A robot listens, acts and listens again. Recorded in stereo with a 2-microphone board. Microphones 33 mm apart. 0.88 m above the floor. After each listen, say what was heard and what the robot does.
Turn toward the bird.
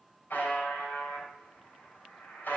Keep listening.
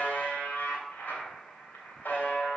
Keep listening.
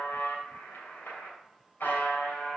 I can't make out a bird to turn to.